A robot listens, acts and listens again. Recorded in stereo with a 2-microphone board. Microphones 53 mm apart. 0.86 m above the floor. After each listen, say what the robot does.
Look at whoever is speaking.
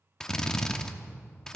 Keep listening.
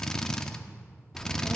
Turn 30° right.
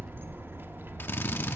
Turn 135° right.
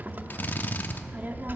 Turn 35° right.
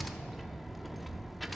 Found it: a child speaking, straight ahead, under 1 m away.